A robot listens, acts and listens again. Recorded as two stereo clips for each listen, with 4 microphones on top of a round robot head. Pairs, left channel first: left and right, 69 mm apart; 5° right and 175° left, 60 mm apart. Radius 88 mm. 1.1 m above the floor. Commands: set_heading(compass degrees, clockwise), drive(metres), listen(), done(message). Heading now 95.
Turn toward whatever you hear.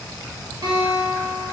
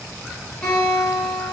set_heading(175)
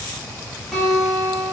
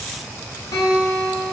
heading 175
done("Facing the guitar.")